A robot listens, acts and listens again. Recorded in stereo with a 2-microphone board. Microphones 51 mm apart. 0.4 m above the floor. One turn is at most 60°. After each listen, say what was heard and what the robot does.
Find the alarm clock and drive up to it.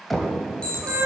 The alarm clock: about 20° left or 160° left. Turn 20° left.
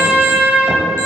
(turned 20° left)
Keep listening.
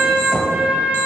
Keep listening.
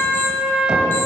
I heard an alarm clock, but can't make it out now. It was about straight ahead or 140° left. I did not reach it.